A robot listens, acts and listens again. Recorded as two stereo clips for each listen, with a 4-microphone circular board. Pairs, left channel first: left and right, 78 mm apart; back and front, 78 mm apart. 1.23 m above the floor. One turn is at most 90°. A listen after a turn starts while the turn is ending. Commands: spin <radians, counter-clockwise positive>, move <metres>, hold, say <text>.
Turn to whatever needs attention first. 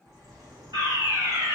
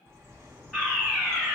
spin -1.57
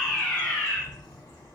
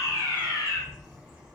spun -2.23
spin 0.61
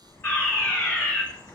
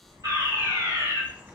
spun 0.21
spin 0.44
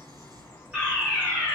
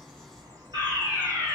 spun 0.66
spin -0.26
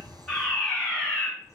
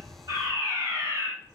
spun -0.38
say Found it: a fire alarm, straight ahead, 2 to 4 m away.